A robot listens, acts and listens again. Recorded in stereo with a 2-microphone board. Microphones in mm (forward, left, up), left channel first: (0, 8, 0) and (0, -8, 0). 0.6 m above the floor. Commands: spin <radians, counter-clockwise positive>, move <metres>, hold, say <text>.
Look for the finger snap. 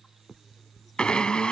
spin 0.52
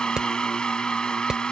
hold
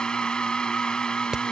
hold
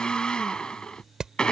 say I heard a finger snap, but can't make it out now. It was about 30° right or 150° left.